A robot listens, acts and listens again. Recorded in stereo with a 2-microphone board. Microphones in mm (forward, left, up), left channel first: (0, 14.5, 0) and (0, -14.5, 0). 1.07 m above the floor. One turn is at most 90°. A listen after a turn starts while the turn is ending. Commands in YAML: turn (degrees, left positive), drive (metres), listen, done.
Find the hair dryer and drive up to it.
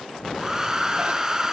turn: -25
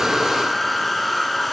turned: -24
drive: 1.0
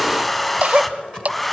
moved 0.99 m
drive: 1.0
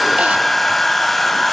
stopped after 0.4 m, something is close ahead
done: "I am next to the hair dryer."